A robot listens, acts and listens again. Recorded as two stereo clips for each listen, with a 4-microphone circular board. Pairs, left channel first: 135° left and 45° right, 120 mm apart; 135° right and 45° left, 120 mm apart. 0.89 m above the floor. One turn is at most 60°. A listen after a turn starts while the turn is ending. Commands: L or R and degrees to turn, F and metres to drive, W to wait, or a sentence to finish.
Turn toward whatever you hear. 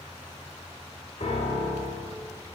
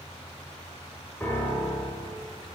L60
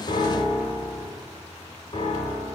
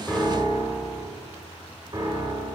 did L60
L60
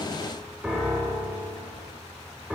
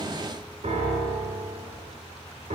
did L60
L35
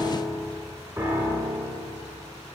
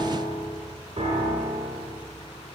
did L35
L20
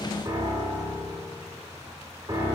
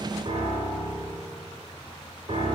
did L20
Facing the piano.